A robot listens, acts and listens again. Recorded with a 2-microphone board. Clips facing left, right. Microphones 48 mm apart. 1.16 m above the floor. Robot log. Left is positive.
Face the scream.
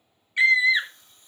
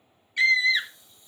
note: The scream: about 20° left or 160° left.
cmd yaw +20
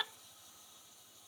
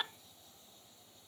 cmd idle
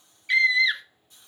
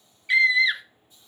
end: Facing the scream.